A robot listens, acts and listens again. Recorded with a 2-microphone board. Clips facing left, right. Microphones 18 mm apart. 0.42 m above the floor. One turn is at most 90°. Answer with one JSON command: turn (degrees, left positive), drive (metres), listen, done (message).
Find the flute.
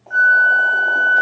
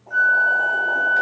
{"turn": 30}
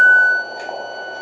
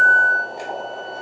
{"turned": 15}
{"turn": 90}
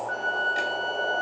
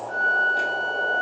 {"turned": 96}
{"turn": 40}
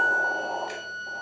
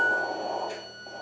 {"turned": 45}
{"done": "Facing the flute."}